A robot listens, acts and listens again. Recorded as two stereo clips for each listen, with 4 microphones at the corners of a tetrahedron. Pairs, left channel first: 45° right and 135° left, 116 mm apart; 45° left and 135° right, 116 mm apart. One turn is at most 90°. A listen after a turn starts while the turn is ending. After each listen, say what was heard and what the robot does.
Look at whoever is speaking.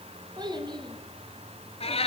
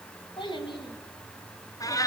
The child speaking: 90° left. Turn 90° left.
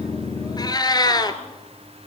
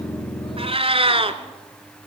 Keep listening.
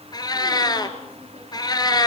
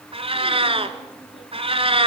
Keep listening.
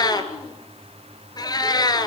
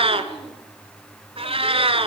Facing where the child speaking came from. I can't hear it now.